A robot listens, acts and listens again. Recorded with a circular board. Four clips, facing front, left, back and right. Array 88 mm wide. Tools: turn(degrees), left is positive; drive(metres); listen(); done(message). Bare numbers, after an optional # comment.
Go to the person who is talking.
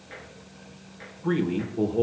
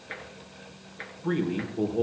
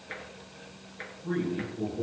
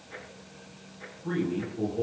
# The man speaking: 25° left.
turn(25)
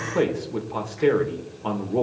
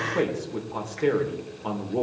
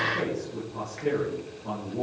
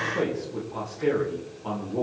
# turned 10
# The man speaking is now 15° left.
turn(15)
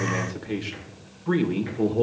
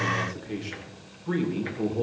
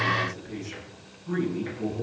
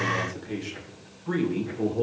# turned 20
drive(1.0)
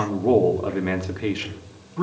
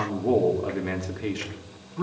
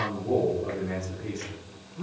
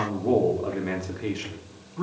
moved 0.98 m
drive(1.0)
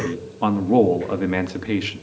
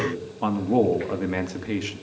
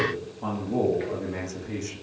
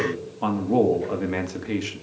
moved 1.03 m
drive(1.0)
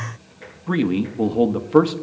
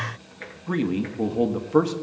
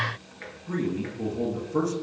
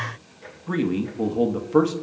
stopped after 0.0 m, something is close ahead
done("I am next to the man speaking.")